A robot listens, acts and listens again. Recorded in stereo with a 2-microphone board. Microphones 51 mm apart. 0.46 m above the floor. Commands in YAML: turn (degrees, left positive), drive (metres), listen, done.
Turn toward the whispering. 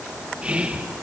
turn: -25
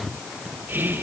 turn: -130
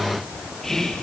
turn: 10
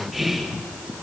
done: "Facing the whispering."